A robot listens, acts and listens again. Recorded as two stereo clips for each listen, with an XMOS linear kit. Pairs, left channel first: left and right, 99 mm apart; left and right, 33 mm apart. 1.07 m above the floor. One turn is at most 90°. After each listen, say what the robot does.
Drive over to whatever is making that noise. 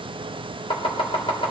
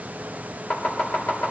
Turn 65° left.
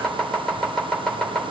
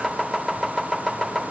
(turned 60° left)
Drive 1.0 m forward.
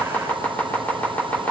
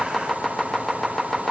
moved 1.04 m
Turn 15° left.
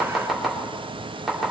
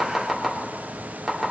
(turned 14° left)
Drive 1.0 m forward.
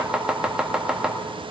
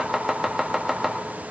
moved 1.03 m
Turn 10° right.
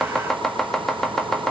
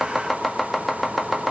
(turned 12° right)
Drive 1.0 m forward.
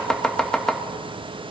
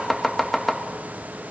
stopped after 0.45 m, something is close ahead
I am next to the chopping.